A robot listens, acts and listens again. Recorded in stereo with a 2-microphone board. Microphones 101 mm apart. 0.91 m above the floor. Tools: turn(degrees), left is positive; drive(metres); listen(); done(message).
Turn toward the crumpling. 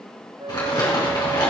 turn(degrees=45)
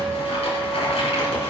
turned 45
turn(degrees=90)
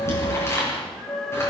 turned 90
turn(degrees=25)
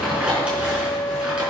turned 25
turn(degrees=-10)
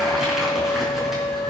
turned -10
done("Found it: crumpling, straight ahead.")